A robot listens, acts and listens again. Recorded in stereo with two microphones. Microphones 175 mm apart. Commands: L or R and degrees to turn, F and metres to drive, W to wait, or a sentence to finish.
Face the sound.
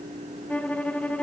L30
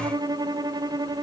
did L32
R25
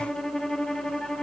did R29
Facing the violin.